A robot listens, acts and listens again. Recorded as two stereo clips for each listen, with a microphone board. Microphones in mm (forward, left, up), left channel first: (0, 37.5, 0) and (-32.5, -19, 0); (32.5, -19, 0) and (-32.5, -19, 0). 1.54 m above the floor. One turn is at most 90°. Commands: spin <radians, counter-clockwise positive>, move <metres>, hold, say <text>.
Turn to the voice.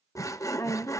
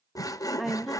spin 1.57
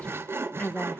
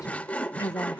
say Found it: a woman speaking, straight ahead, 1 to 2 m away.